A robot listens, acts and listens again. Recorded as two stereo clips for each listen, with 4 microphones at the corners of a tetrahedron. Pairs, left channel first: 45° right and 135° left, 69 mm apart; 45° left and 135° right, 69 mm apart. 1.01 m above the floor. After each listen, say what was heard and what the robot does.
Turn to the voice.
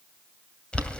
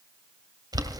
Keep listening.
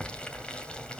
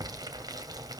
Keep listening.
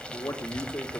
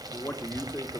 The man speaking: 15° right. Turn 15° right.
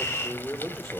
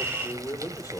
Found it: a man speaking, straight ahead, 2 to 4 m away.